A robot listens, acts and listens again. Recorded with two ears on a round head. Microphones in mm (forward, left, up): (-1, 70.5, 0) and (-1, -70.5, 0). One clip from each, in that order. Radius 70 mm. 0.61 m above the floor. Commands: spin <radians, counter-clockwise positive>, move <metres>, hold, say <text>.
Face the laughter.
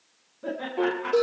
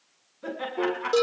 spin -0.79
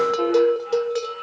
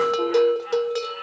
hold
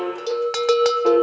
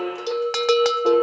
hold
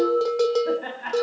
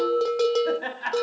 spin -1.92
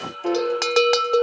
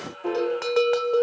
hold
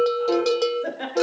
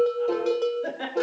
say Facing the laughter, over 4 m away.